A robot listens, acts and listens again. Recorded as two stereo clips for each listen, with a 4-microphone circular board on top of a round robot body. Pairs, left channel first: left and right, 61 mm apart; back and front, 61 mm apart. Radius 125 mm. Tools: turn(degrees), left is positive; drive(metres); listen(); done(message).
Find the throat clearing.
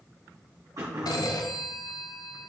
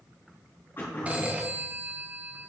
turn(degrees=-125)
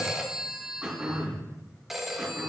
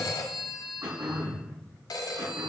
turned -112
turn(degrees=-10)
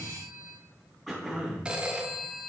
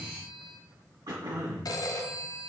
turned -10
done("Found it: throat clearing, straight ahead.")